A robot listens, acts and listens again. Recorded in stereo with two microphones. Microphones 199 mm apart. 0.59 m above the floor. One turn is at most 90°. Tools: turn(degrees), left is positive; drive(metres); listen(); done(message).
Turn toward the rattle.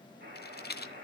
turn(degrees=55)
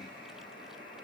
listen()
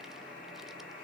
listen()
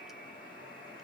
done("I heard a rattle, but can't make it out now. It was about straight ahead or 70° left.")